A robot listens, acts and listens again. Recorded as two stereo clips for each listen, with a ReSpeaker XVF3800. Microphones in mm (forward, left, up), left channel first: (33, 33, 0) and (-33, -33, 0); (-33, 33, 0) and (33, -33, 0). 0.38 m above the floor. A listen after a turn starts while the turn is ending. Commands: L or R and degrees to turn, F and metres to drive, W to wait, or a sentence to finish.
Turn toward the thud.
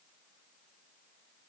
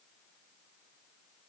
W
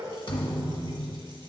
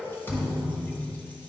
L70
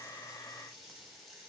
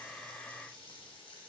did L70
Facing where the thud came from. I can't hear it now.